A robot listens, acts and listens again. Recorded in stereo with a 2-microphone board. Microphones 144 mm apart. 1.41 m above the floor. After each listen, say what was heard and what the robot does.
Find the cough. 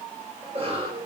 The cough: about 45° right or 135° right. Turn 45° right.
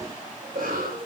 So it is at 90° right. Turn 90° right.
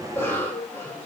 The cough is now 15° left. Turn 15° left.
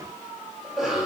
Found it: a cough, straight ahead.